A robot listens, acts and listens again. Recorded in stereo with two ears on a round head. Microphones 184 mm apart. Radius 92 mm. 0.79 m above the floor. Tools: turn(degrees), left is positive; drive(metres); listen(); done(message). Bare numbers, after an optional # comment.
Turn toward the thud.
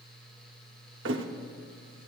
# The thud: about 60° right or 120° right.
turn(-60)
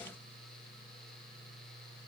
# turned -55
listen()
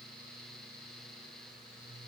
done("I heard a thud, but can't make it out now. It was about 5° right or 65° right.")